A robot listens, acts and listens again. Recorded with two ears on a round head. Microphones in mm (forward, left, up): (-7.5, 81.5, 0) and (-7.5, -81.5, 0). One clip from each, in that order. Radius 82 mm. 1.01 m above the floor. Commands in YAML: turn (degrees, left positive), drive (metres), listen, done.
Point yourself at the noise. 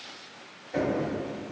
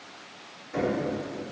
turn: -20
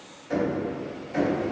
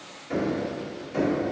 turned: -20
done: "Facing the knocking, 1 to 2 m away."